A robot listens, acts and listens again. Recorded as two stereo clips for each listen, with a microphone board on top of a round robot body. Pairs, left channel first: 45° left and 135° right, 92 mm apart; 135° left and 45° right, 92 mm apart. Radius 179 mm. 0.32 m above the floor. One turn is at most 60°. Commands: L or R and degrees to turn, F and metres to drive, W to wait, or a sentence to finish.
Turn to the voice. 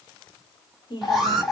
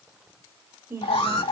L20
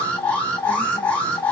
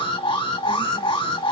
W
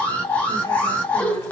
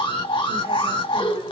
W
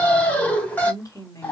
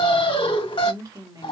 Found it: a woman speaking, straight ahead, 2 to 4 m away.